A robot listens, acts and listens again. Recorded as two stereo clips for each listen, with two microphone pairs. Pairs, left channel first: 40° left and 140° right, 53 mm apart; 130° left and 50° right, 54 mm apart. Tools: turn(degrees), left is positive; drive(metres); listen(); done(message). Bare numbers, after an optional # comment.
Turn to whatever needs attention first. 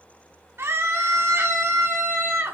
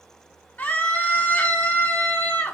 # The scream: 175° right.
turn(-175)
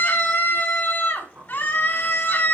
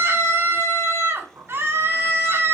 # The scream is now 15° right.
turn(-15)
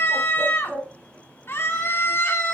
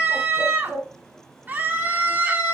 done("Facing the scream.")